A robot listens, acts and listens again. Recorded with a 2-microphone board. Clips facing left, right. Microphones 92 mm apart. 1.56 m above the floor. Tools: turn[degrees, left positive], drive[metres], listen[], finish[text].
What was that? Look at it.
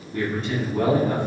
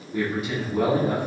Action: turn[-30]
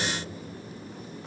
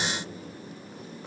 Action: listen[]
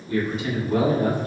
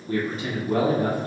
Thought: So it is at 140° right.
Action: turn[-140]
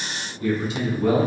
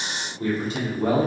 Thought: The man speaking is now 40° right.
Action: turn[-40]
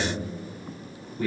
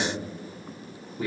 Action: finish[Facing the man speaking, 1 to 2 m away.]